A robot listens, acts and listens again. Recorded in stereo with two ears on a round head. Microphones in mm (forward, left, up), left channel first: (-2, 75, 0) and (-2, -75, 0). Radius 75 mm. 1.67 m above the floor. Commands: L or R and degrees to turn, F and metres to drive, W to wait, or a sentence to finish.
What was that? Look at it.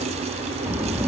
R30
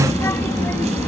L10
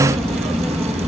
Found it: a child speaking, straight ahead.